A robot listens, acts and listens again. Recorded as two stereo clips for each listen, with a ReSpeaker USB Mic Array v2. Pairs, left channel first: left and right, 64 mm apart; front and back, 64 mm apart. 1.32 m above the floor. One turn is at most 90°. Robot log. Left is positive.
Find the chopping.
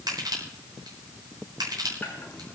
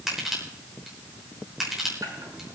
cmd idle
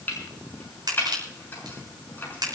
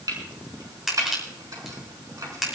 note: The chopping: 150° left.
cmd yaw +90
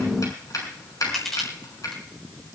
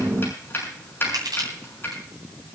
note: The chopping is now 55° left.
cmd yaw +55
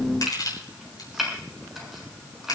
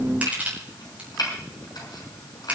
end: Found it: chopping, straight ahead.